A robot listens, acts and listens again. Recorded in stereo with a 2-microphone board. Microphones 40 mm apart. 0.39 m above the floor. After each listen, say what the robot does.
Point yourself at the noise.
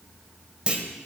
Turn 25° right.
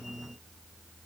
Keep listening.
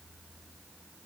I heard a clunk, but can't make it out now. It was about straight ahead or 130° right.